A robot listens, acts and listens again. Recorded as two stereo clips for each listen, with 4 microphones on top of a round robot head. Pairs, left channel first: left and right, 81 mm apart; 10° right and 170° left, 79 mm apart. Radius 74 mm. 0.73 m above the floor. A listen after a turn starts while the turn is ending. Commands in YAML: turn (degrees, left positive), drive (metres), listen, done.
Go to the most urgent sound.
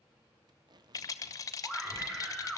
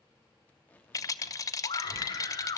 turn: -10
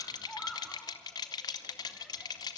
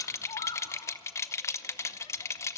drive: 1.0
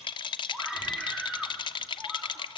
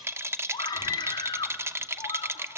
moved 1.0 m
drive: 1.0
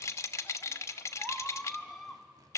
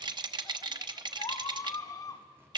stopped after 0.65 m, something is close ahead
done: "Arrived at the scream, straight ahead."